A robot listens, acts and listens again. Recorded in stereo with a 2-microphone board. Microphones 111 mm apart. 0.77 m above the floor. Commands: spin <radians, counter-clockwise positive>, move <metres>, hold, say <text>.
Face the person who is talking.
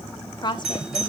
spin 0.70
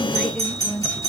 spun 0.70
spin 0.17
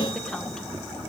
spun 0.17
hold
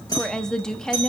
say Facing the woman speaking.